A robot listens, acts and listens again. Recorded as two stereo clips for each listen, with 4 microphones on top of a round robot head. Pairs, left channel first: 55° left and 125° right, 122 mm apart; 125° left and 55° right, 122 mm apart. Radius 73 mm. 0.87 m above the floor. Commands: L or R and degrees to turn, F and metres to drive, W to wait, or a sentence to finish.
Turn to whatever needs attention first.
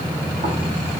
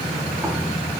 W
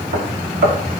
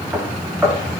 W
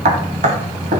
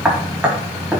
I can't make out anything urgent, only knocking.